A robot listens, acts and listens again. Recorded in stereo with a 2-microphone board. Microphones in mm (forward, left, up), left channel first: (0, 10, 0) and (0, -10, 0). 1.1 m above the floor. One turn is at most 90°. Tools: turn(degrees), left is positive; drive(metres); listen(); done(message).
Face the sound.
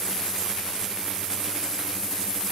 listen()
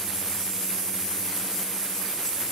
listen()
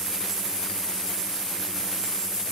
done("I can't make out anything to turn to.")